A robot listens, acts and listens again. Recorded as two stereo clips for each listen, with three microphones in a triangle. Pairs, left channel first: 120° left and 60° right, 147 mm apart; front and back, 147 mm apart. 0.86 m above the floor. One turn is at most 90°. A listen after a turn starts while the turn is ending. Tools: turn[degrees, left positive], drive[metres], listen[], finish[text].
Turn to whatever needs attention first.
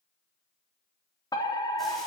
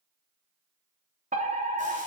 Thought: The fire alarm: 175° left.
Action: turn[90]
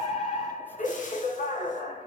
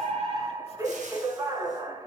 Thought: The fire alarm is now 115° left.
Action: turn[90]
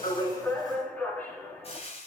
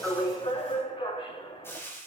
Thought: The fire alarm is now 45° left.
Action: turn[45]
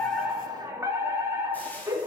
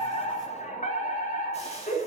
Thought: The fire alarm is now 10° left.
Action: turn[10]
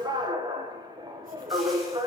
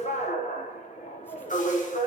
Action: finish[Facing the fire alarm, 2 to 4 m away.]